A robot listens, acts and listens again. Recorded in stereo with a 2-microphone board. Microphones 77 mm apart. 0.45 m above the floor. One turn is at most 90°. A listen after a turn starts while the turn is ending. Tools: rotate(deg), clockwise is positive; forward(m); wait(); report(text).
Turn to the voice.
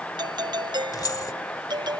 wait()
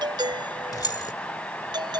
wait()
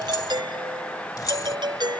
report("I can't make out anyone speaking to turn to.")